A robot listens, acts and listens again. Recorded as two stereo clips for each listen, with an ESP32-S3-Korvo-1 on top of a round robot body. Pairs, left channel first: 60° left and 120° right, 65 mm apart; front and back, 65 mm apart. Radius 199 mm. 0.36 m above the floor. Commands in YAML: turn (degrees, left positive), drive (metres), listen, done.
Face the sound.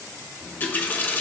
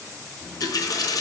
done: "Found it: a running tap, straight ahead."